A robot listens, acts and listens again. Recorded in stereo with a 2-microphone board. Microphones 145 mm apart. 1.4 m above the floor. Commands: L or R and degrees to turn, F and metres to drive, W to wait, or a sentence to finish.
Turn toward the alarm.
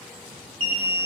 R40
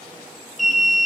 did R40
Facing the alarm, 1 to 2 m away.